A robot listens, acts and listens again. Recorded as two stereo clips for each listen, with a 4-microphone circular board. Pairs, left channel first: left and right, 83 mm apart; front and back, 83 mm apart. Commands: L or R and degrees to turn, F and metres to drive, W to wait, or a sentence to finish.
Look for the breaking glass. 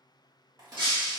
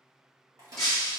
R85
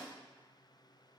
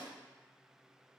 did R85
Facing where the breaking glass came from. I can't hear it now.